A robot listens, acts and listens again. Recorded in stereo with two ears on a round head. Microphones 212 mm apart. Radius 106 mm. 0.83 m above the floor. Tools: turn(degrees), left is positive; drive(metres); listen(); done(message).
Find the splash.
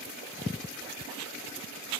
listen()
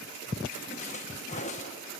turn(degrees=30)
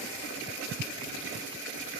listen()
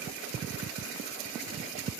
done("I heard a splash, but can't make it out now. It was about straight ahead or 120° left.")